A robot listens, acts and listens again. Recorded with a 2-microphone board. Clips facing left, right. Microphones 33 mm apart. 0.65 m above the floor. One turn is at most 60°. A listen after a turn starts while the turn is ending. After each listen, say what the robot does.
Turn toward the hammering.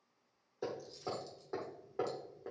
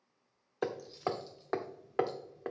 Turn 60° right.
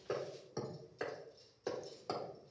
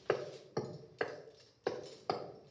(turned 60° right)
Turn 35° right.
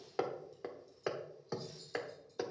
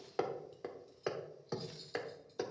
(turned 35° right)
Found it: hammering, straight ahead.